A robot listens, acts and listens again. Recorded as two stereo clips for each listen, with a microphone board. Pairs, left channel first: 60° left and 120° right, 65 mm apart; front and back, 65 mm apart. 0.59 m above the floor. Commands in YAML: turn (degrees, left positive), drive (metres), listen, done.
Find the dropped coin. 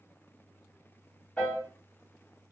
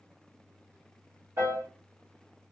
listen: true
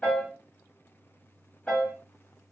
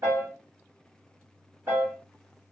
listen: true
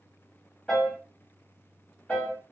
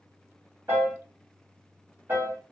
done: "I can't make out a dropped coin to turn to."